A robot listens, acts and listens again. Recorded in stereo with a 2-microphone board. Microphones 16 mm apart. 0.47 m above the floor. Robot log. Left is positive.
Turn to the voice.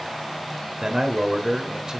note: The man speaking: about 45° right or 135° right.
cmd yaw -45
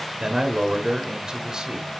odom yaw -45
note: So it is at 80° right.
cmd yaw -80
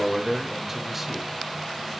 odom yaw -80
note: The man speaking is now 25° right.
cmd yaw -25
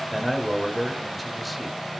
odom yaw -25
end: Found it: a man speaking, straight ahead.